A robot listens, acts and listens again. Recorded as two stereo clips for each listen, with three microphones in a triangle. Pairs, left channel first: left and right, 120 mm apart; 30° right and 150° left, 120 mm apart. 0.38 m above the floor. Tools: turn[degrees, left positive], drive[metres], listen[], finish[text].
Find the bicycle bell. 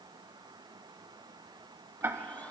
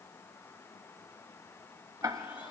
Action: listen[]
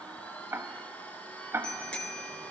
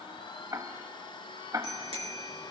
Thought: The bicycle bell: 170° left.
Action: turn[170]
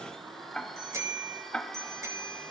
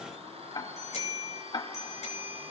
Thought: The bicycle bell is now 25° right.
Action: turn[-25]
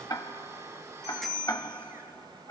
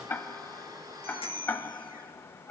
Action: finish[Found it: a bicycle bell, straight ahead.]